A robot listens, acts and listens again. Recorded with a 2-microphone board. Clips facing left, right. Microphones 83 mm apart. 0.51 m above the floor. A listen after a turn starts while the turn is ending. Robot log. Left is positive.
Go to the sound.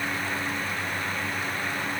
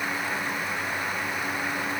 cmd idle
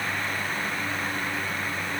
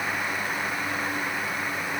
cmd idle
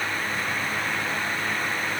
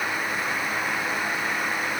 end: I can't make out anything to turn to.